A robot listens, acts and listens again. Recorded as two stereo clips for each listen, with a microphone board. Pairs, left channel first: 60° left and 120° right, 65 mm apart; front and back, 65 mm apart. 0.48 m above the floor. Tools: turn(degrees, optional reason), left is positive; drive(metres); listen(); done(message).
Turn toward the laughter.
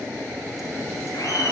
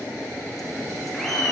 turn(degrees=85, reason="The laughter: 85° left.")
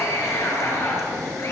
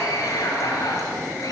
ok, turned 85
turn(degrees=20, reason="The laughter is now 20° left.")
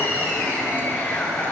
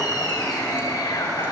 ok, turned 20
done("Facing the laughter.")